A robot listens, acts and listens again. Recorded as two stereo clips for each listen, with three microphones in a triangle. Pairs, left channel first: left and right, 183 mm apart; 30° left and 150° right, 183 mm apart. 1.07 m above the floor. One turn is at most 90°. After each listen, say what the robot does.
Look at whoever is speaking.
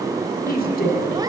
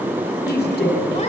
Turn 55° left.
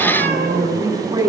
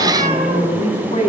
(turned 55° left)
Turn 20° right.
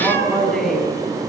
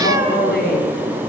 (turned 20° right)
Facing the woman speaking, over 4 m away.